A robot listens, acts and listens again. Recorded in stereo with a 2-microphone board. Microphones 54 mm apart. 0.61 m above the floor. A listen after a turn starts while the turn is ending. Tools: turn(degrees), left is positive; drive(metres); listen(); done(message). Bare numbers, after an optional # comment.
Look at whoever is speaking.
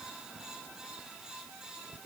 listen()
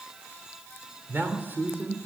# The man speaking: about 35° right or 145° right.
turn(-35)
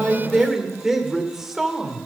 # So it is at 10° right.
turn(-10)
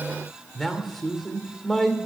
done("Facing the man speaking, 2 to 4 m away.")